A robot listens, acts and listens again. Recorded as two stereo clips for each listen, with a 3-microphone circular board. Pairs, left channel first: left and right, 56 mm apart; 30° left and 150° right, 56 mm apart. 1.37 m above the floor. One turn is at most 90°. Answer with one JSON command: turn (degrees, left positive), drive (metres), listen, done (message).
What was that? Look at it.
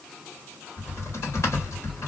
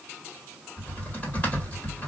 {"turn": 85}
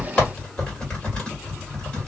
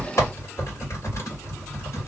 {"turn": 20}
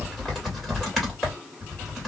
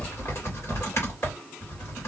{"done": "Facing the typing on a keyboard, 1 to 2 m away."}